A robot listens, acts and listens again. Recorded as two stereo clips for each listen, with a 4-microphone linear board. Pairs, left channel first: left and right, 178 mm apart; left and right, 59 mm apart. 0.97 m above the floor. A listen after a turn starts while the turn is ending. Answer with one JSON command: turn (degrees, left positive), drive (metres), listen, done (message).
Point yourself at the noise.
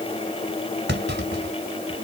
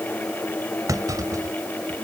{"turn": -90}
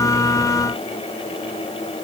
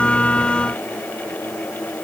{"done": "I heard a clunk from this way, but can't make it out now."}